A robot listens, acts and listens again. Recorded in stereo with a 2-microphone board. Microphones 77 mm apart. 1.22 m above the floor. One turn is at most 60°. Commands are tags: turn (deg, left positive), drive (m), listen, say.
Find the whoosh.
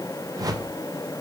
<turn deg="-55"/>
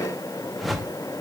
<say>Found it: a whoosh, straight ahead.</say>